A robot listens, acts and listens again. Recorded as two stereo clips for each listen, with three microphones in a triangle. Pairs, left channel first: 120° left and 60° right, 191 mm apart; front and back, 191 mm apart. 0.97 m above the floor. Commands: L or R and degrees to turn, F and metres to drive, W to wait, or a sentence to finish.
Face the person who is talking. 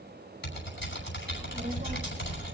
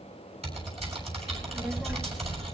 R100
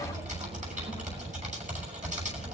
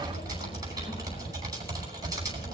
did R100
L10
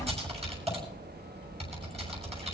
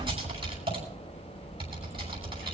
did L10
Facing the child speaking.